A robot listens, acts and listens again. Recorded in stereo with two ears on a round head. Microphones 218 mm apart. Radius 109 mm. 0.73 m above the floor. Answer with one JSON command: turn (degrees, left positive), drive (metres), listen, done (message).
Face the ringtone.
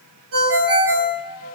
{"turn": -60}
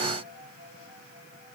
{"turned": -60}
{"listen": true}
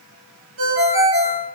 {"turn": -55}
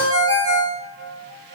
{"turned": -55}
{"turn": -20}
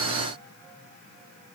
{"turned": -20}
{"listen": true}
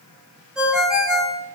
{"done": "Found it: a ringtone, straight ahead."}